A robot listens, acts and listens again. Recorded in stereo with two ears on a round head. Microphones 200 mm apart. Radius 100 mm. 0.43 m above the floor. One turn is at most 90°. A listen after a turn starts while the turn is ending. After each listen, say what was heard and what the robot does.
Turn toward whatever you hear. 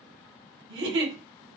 The giggle: about 55° right or 125° right. Turn 55° right.
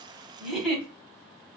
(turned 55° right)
Found it: a giggle, straight ahead, 1 to 2 m away.